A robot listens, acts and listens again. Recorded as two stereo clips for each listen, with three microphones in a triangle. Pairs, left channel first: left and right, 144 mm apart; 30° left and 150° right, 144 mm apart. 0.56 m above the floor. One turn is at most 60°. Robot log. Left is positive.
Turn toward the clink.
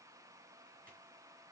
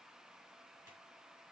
cmd idle
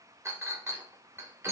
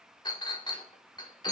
note: The clink: 25° right.
cmd yaw -25
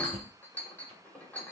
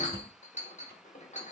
note: The clink is now 15° left.
cmd yaw +15
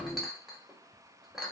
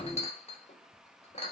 end: Facing the clink, 1 to 2 m away.